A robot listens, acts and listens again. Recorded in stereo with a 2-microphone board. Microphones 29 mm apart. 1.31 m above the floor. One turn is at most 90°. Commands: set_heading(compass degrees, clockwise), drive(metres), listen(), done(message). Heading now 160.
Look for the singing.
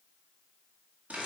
listen()
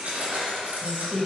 set_heading(195)
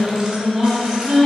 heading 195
set_heading(205)
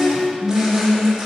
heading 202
done("Found it: singing, straight ahead.")